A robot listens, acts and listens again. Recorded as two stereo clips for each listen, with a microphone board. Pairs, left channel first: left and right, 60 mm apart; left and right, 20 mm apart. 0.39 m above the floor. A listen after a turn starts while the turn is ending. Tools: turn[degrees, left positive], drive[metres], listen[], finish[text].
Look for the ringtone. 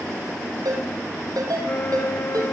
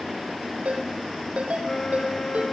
Action: turn[-90]
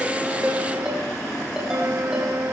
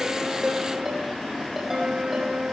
Action: listen[]
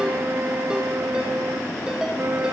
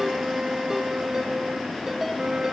Action: listen[]
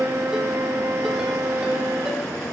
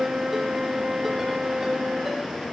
Action: finish[Facing where the ringtone came from. I can't hear it now.]